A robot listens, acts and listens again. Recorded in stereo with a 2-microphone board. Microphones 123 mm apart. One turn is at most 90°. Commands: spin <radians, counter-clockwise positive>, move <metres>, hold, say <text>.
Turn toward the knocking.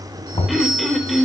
spin 0.96
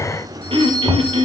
say Facing the knocking, 2 to 4 m away.